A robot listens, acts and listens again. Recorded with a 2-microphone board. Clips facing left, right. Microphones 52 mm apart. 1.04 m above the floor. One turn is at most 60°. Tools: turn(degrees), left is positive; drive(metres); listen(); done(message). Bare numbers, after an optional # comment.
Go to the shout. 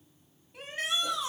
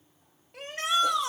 turn(-60)
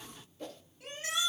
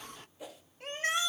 # So it is at 45° right.
turn(-45)
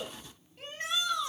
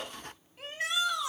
drive(1.0)
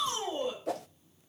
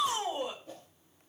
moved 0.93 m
# The shout is now 10° right.
turn(-10)
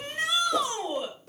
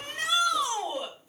drive(1.0)
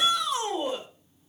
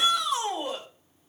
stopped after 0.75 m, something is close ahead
done("Blocked. The shout is further on, straight ahead.")